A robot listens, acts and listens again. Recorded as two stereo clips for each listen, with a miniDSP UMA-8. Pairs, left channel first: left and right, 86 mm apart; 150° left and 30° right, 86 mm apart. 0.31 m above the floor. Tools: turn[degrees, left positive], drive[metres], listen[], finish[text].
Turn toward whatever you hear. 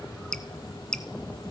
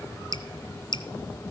Thought: The dripping: 170° left.
Action: turn[170]
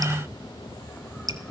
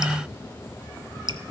Thought: The dripping is now 50° right.
Action: turn[-50]
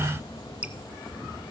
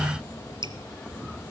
Thought: The dripping is now 15° right.
Action: turn[-15]
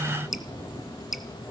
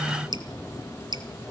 Action: finish[Facing the dripping, 1 to 2 m away.]